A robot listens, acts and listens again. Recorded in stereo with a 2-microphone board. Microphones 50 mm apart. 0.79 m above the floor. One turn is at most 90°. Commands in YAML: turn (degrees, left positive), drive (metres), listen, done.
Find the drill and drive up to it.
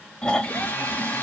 turn: 45
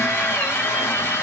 turn: 80
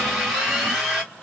turn: -15
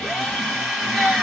drive: 1.0
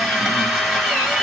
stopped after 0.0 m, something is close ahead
done: "Blocked. The drill is further on, straight ahead."